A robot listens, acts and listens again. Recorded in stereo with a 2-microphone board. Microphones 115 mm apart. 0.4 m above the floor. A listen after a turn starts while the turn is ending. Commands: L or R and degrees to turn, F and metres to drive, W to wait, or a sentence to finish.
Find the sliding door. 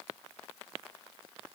W
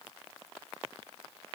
W
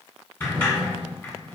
L20
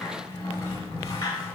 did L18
L145
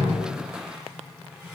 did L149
W
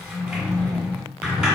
Found it: a sliding door, straight ahead, 1 to 2 m away.